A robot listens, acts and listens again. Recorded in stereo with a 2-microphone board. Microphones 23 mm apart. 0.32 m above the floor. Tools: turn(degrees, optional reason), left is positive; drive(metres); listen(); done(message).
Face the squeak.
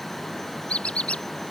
turn(degrees=55, reason="The squeak: about 55° left or 125° left.")
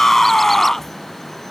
listen()
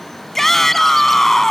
listen()
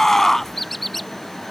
done("Facing the squeak.")